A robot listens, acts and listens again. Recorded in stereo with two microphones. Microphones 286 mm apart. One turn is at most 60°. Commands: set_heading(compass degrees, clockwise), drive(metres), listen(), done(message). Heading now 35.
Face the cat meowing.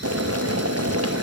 listen()
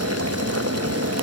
listen()
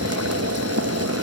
done("I can't make out a cat meowing to turn to.")